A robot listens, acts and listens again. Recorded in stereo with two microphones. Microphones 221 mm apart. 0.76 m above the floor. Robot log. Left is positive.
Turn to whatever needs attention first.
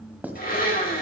cmd idle
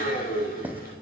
cmd idle
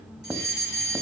note: The fire alarm: about 55° right or 125° right.
cmd yaw -55
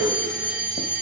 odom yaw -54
note: So it is at 50° right.
cmd yaw -50
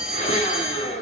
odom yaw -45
end: Found it: a fire alarm, straight ahead, 2 to 4 m away.